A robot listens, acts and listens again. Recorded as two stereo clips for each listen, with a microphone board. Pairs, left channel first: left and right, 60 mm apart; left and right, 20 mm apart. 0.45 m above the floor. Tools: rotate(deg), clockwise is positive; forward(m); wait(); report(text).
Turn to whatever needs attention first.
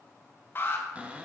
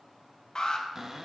rotate(-40)
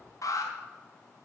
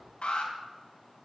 rotate(-95)
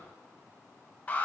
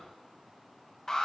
rotate(-25)
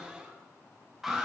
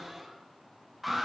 rotate(10)
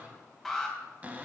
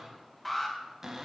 report("Found it: an alarm, straight ahead, 2 to 4 m away.")